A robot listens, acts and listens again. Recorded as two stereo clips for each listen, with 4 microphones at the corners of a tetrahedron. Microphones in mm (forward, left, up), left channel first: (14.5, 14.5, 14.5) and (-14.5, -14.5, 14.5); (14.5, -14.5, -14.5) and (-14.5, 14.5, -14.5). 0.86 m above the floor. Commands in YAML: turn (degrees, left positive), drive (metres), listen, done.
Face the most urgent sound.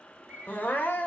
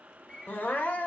done: "Found it: crying, straight ahead."